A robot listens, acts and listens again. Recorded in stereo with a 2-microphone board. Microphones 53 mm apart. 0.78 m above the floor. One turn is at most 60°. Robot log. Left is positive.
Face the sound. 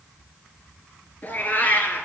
note: The cat meowing: about 40° left or 140° left.
cmd yaw +40
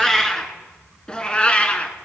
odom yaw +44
note: So it is at 30° left.
cmd yaw +30
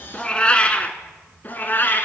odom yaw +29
note: The cat meowing is now 45° left.
cmd yaw +45
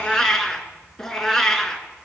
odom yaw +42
note: The cat meowing is now 10° left.
cmd yaw +10
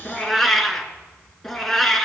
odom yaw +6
end: Found it: a cat meowing, straight ahead.